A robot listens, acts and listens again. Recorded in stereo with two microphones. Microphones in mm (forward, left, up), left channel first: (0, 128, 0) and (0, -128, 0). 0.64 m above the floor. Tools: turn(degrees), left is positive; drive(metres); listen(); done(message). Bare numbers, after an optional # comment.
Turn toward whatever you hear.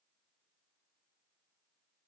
listen()
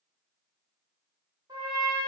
turn(-30)
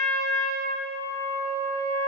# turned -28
# So it is at 15° left.
turn(15)
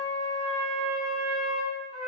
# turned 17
done("Facing the trumpet, 1 to 2 m away.")